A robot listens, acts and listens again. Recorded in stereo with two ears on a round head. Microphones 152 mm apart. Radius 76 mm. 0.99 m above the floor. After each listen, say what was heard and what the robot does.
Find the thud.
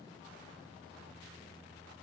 Keep listening.
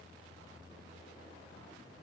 Keep listening.
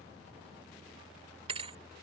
The thud: about 35° right or 145° right. Turn 35° right.
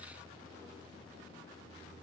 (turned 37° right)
Keep listening.
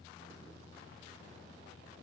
I heard a thud, but can't make it out now. It was about 5° left or 110° right.